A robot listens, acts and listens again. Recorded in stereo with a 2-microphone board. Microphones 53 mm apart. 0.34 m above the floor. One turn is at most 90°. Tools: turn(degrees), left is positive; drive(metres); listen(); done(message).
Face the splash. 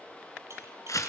listen()
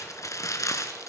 listen()
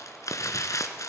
done("I can't make out a splash, only crumpling.")